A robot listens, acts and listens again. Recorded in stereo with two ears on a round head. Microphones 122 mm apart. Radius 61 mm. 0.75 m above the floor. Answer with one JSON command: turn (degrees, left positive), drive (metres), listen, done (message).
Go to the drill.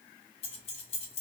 {"listen": true}
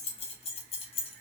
{"listen": true}
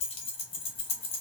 {"done": "I can't make out a drill to turn to."}